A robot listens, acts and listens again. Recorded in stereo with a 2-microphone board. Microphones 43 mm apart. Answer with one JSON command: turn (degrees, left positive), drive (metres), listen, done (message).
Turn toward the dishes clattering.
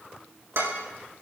{"turn": -90}
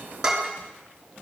{"turn": -10}
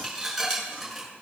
{"done": "Found it: dishes clattering, straight ahead."}